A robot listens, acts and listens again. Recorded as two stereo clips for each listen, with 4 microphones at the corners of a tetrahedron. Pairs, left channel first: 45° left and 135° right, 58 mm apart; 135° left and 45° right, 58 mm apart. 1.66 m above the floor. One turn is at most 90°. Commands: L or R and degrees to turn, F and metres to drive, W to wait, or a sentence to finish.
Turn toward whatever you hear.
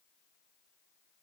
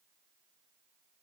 W
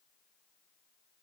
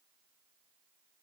W
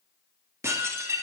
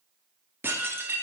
R90
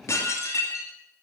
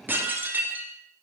L10
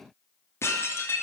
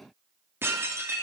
Facing the dishes clattering.